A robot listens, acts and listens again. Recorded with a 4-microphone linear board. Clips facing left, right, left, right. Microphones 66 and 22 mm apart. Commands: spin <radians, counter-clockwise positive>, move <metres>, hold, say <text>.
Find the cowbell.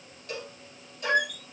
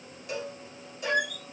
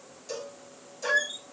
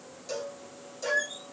spin -0.52
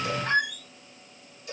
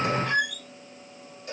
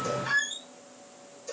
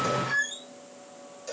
spin -2.53
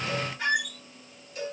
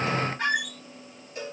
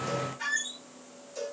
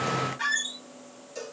spin -0.61
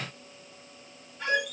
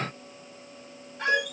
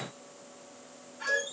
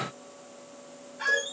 hold
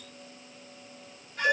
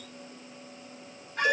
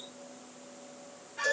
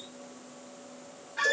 hold
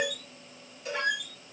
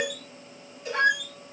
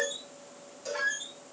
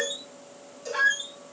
say Facing the cowbell.